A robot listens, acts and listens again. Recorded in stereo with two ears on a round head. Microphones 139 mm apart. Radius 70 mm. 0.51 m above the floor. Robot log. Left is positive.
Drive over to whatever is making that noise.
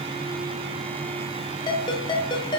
note: The ringtone: about 30° left or 150° left.
cmd yaw +30
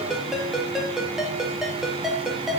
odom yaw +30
cmd fwd 1.0
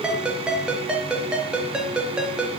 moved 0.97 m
cmd fwd 1.0
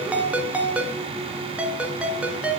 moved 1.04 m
note: The ringtone is now 10° right.
cmd yaw -10
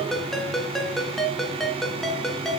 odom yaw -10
cmd fwd 1.0
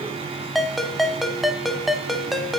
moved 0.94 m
cmd fwd 1.0
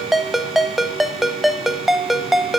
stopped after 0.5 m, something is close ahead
end: Arrived at the ringtone, straight ahead.